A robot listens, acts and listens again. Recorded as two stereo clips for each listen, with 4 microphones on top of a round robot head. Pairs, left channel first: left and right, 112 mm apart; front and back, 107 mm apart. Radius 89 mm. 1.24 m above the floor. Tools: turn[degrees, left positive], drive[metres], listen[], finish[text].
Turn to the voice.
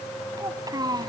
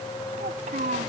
Thought: The child speaking: 145° right.
Action: turn[-145]
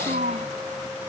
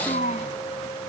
Thought: The child speaking is now 45° right.
Action: turn[-45]
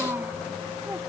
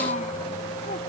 Thought: The child speaking is now 10° right.
Action: turn[-10]
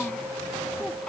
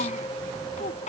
Action: finish[Facing the child speaking.]